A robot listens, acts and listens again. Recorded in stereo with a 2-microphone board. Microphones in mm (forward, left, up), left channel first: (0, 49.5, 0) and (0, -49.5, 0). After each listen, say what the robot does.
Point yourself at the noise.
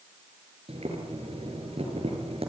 Turn 90° right.
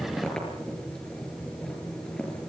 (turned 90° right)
Turn 10° left.
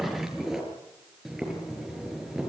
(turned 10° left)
Found it: boiling, straight ahead.